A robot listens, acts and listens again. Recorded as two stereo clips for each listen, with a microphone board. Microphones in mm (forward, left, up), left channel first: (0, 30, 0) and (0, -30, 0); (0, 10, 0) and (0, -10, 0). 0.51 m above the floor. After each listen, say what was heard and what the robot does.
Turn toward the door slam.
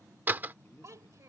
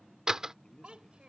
The door slam: about 35° right or 145° right. Turn 35° right.
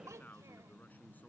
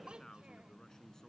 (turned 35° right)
Keep listening.
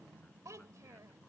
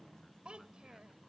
I heard a door slam, but can't make it out now. It was about straight ahead or 110° right.